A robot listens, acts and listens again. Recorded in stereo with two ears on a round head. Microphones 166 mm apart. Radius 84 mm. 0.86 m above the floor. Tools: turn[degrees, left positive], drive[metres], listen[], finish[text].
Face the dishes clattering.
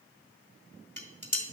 Action: turn[30]
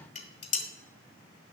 Thought: So it is at 140° left.
Action: turn[140]
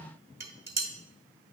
Thought: The dishes clattering is now 15° right.
Action: turn[-15]
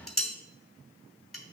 Action: finish[Found it: dishes clattering, straight ahead.]